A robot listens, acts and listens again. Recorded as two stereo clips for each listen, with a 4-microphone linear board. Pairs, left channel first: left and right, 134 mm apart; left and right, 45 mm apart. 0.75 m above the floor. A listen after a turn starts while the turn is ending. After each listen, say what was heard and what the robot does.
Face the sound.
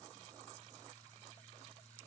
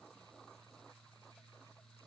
Keep listening.
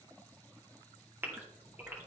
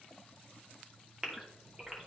The gasp: about 15° right or 165° right. Turn 15° right.
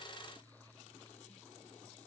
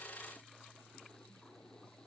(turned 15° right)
Keep listening.
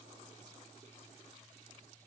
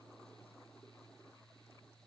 I heard a gasp, but can't make it out now. It was about straight ahead or 150° right.